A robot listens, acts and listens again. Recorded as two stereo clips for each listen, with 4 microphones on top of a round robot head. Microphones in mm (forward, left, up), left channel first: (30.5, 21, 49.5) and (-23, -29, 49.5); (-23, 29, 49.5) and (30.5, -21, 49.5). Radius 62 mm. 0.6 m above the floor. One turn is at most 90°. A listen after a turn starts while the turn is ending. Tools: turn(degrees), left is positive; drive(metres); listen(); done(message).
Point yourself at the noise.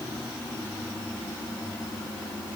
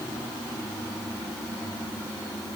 listen()
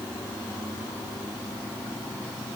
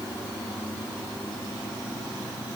listen()
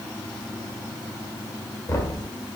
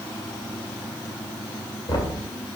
turn(degrees=90)
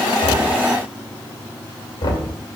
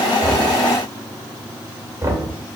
turn(degrees=10)
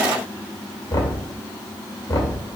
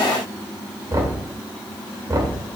done("Facing the knocking, 2 to 4 m away.")